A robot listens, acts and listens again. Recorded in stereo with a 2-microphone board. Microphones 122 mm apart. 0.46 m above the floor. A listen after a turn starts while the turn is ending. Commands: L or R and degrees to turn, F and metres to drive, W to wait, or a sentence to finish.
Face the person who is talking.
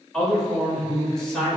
L30
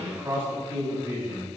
R25
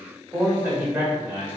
R20
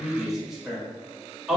Found it: a man speaking, straight ahead, 1 to 2 m away.